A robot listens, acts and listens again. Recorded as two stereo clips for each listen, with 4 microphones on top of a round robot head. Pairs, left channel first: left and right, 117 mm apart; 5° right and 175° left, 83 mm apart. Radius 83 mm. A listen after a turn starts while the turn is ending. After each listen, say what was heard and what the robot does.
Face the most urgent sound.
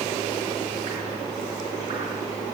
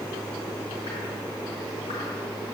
Keep listening.
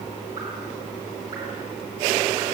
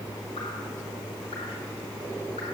Keep listening.
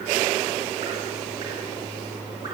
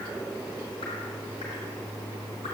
I can't make out anything urgent to turn to.